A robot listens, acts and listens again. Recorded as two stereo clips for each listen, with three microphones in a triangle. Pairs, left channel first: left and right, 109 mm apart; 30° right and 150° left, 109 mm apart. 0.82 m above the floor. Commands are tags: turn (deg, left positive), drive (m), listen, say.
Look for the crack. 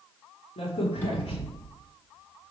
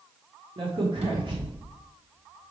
<turn deg="115"/>
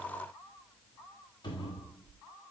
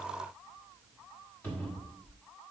<say>Facing where the crack came from. I can't hear it now.</say>